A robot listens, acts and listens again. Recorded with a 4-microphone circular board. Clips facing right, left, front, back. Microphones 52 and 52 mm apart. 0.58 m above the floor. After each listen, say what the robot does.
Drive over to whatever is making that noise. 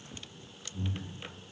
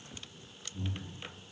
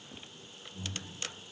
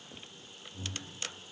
Turn 125° right.
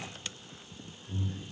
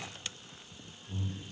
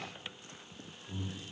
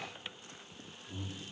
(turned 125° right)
Turn 30° right.
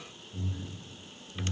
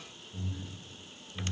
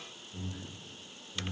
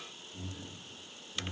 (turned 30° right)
Turn 15° right.
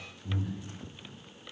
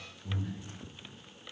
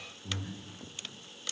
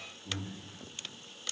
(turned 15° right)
Drive 1.0 m forward.
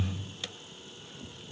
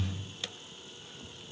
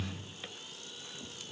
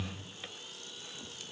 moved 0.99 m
Drive 1.0 m forward.
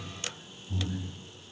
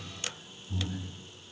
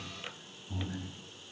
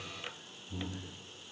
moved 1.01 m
Drive 1.0 m forward.
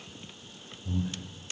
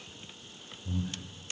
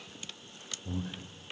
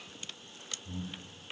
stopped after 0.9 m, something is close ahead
I am next to the breathing.